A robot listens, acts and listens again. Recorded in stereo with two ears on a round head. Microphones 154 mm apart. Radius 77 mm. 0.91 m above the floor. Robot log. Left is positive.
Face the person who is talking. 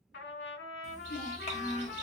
note: The child speaking: about 45° left or 135° left.
cmd yaw +45
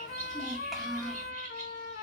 end: Found it: a child speaking, straight ahead, 1 to 2 m away.